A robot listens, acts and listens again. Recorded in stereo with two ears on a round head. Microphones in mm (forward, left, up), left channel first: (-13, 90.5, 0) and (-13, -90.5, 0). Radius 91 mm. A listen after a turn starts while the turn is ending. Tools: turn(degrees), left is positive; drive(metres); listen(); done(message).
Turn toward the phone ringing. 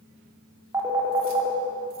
turn(degrees=-15)
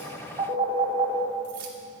turn(degrees=-150)
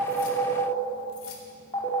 turn(degrees=25)
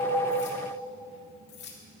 listen()
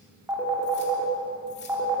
turn(degrees=-10)
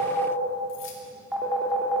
done("Found it: a phone ringing, straight ahead.")